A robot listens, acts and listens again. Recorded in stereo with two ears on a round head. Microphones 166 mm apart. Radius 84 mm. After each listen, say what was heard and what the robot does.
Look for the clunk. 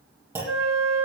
Turn 30° right.
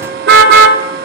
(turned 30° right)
Keep listening.
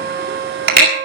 I heard a clunk, but can't make it out now. It was about 15° left or 135° right.